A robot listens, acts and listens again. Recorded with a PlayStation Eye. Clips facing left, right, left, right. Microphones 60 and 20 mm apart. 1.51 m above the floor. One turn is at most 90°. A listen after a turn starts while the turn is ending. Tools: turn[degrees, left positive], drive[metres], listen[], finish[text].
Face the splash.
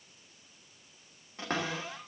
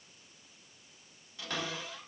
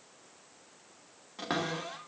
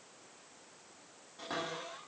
Action: listen[]
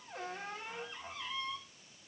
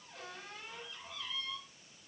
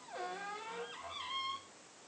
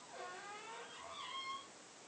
Action: listen[]
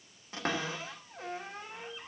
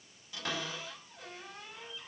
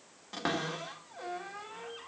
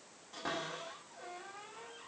Action: finish[I can't make out a splash, only a cupboard door.]